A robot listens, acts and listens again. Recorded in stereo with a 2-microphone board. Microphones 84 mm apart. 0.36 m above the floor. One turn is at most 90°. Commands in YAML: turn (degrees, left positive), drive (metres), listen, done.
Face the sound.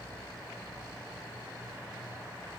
listen: true
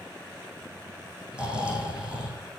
turn: -30
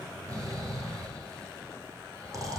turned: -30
turn: -90
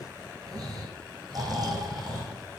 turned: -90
turn: -50
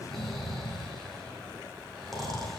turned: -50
done: "Found it: snoring, straight ahead, 2 to 4 m away."